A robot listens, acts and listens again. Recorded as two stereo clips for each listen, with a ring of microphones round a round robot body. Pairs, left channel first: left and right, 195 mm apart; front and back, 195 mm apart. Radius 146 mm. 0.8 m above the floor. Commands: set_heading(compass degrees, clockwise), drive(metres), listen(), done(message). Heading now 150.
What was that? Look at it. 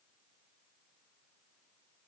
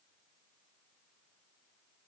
listen()
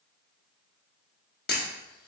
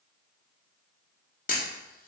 set_heading(100)
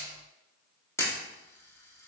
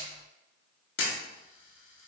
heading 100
set_heading(90)
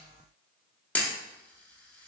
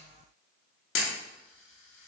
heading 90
done("Found it: a camera shutter, straight ahead.")